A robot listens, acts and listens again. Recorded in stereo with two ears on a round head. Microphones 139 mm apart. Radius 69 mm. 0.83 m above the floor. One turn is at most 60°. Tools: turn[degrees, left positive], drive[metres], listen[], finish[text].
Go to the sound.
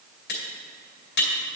Action: turn[60]
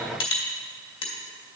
Thought: So it is at 40° left.
Action: turn[40]
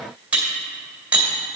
Thought: The cutlery clinking is now 10° right.
Action: turn[-10]
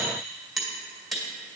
Action: drive[1.0]
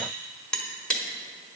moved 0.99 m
Action: drive[1.0]
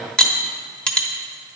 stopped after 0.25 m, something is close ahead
Action: finish[I am next to the cutlery clinking.]